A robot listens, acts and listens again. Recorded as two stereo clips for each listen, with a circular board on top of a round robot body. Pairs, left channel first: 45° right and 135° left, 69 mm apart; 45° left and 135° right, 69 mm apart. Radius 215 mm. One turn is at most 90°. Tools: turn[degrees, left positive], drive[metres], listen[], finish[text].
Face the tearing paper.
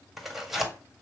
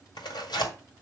Thought: The tearing paper: 45° left.
Action: turn[45]
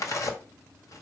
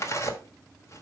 Action: finish[Facing the tearing paper.]